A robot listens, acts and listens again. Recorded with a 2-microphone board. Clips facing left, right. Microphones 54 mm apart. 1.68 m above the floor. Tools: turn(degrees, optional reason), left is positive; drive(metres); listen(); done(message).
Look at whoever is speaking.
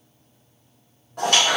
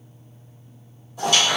listen()
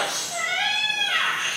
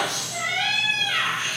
listen()
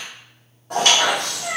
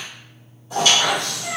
done("I can't make out anyone speaking, only a squeak.")